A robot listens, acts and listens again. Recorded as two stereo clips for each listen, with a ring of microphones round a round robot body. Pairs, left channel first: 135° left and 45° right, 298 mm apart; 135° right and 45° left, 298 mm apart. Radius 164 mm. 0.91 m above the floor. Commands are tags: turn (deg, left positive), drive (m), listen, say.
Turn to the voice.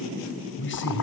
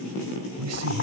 <turn deg="85"/>
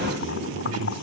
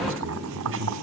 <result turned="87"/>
<say>Found it: a man speaking, straight ahead.</say>